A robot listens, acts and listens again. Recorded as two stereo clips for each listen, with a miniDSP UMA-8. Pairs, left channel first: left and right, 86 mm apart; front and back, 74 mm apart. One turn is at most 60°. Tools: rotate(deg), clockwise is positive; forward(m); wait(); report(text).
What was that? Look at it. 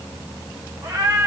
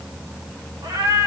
rotate(60)
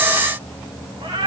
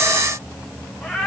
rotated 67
rotate(60)
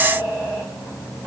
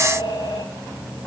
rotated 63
rotate(20)
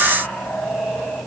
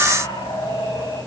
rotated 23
report("Facing the cat meowing.")